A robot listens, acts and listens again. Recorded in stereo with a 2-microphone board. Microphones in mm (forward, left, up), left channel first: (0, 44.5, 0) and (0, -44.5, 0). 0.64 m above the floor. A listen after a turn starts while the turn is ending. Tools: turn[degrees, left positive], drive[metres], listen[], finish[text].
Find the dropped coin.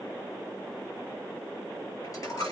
Thought: The dropped coin: about 45° left or 135° left.
Action: turn[45]
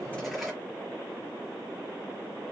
Action: finish[Facing the dropped coin, over 4 m away.]